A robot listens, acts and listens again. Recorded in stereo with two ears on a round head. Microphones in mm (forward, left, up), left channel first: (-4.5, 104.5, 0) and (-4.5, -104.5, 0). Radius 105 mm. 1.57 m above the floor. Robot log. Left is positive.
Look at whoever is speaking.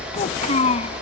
note: The child speaking: about 30° left or 150° left.
cmd yaw +30
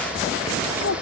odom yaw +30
cmd idle
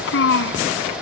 note: So it is at 120° left.
cmd yaw +120
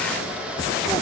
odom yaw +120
cmd idle
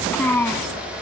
note: The child speaking is now 10° left.
cmd yaw +10
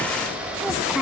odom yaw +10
cmd idle
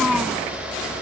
cmd idle
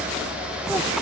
end: I heard a child speaking from this way, but can't make it out now.